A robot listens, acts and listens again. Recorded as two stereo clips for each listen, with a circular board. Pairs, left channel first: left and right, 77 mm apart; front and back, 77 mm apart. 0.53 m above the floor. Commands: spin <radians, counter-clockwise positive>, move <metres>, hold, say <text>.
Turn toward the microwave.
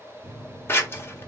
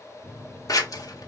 spin -1.75
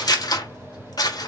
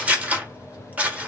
spin -0.35
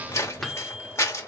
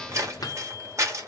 say Facing the microwave, under 1 m away.